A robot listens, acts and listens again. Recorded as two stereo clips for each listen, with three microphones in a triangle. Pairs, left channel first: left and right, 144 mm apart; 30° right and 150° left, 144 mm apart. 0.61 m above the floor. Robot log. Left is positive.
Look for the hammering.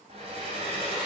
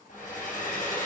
cmd idle
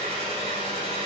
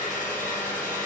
cmd idle
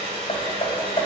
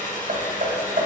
note: The hammering: 135° left.
cmd yaw +135
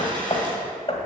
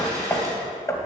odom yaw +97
note: The hammering is now 40° left.
cmd yaw +40
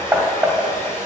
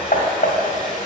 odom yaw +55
note: The hammering is now 15° right.
cmd yaw -15
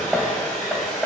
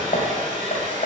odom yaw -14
end: Found it: hammering, straight ahead.